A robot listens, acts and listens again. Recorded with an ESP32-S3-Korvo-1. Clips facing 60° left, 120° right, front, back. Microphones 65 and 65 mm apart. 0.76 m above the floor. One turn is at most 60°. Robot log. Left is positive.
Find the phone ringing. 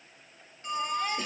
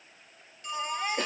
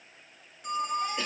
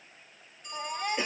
end: Found it: a phone ringing, straight ahead.